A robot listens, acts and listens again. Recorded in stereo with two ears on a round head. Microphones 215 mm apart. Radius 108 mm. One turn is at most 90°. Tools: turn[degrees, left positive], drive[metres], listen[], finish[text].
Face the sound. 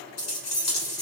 Thought: The keys jangling: about 70° left or 110° left.
Action: turn[70]
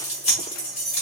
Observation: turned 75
Thought: So it is at 25° left.
Action: turn[25]
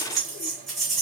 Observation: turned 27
Action: finish[Facing the keys jangling.]